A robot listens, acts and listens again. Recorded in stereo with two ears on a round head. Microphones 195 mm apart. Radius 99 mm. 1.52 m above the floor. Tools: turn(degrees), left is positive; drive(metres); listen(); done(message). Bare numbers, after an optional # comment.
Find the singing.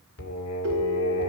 turn(90)
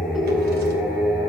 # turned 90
done("Facing the singing, 2 to 4 m away.")